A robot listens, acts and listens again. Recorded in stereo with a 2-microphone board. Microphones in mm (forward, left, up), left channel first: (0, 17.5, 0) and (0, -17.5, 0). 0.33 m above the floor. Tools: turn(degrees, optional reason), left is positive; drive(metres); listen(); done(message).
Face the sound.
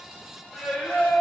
turn(degrees=35, reason="The singing: about 35° left or 145° left.")
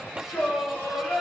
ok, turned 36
turn(degrees=125, reason="So it is at 125° left.")
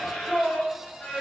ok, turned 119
turn(degrees=25, reason="The singing is now 25° left.")
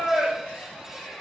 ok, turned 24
done("Found it: singing, straight ahead.")